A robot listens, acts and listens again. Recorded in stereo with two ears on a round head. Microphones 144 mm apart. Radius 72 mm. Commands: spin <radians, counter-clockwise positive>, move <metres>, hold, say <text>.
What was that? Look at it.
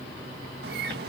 spin -1.13
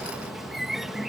say Facing the bird.